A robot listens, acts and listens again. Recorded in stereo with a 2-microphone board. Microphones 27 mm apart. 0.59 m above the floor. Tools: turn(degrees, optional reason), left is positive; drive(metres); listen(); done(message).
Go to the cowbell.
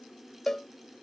turn(degrees=15, reason="The cowbell: about 15° left or 165° left.")
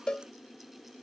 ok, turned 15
turn(degrees=150, reason="So it is at 150° left.")
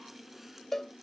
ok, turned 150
turn(degrees=15, reason="The cowbell is now 15° left.")
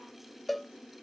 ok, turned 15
drive(metres=1.0)
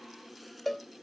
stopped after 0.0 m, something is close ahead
turn(degrees=10, reason="The cowbell is now 10° left.")
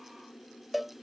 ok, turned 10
done("Something is in my way. I am facing the cowbell but have not reached it.")